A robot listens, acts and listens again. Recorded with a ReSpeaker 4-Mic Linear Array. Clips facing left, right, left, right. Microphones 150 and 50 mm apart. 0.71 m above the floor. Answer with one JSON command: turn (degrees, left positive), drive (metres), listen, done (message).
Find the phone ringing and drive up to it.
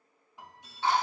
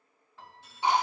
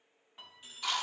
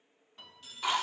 {"turn": 15}
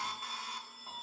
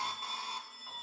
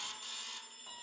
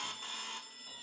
{"drive": 1.0}
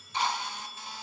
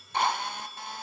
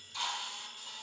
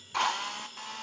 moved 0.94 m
{"drive": 1.0}
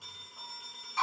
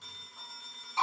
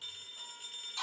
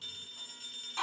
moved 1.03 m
{"turn": 10}
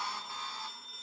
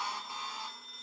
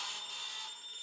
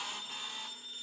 {"drive": 1.0}
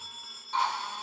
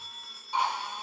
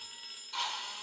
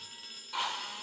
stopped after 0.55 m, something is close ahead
{"done": "Arrived at the phone ringing, straight ahead."}